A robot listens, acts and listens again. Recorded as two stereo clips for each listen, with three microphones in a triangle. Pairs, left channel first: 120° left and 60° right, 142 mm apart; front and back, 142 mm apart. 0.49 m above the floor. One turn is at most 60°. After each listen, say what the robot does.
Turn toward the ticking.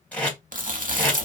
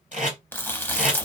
Keep listening.
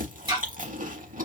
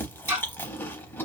Turn 60° right.
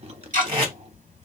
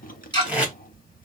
Turn 55° right.
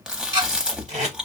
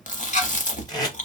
Turn 10° right.
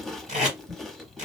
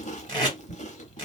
Keep listening.
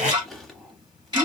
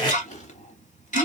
Facing the ticking, 2 to 4 m away.